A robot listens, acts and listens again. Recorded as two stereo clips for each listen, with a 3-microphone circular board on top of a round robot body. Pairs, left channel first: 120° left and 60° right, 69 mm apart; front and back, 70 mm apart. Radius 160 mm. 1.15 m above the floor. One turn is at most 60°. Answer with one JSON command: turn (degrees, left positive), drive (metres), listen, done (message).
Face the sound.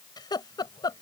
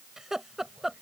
{"turn": 60}
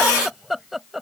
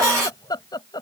{"turn": 25}
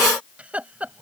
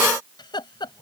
{"turn": 10}
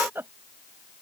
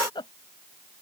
{"done": "Facing the laughter."}